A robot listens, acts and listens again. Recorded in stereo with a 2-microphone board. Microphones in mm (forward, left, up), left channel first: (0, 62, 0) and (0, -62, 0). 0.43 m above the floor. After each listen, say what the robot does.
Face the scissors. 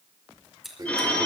Turn 30° left.
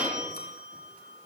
Keep listening.
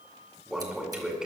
Keep listening.
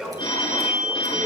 I heard scissors, but can't make it out now. It was about 30° right or 150° left.